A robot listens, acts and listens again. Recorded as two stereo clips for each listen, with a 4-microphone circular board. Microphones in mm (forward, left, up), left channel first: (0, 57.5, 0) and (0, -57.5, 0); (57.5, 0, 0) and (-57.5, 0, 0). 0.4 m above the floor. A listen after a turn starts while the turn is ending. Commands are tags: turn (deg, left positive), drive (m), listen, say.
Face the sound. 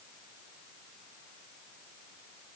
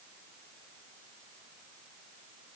<listen/>
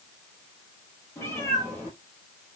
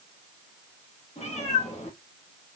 <turn deg="25"/>
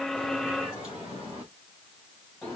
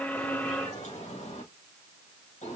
<say>Facing the cat meowing, over 4 m away.</say>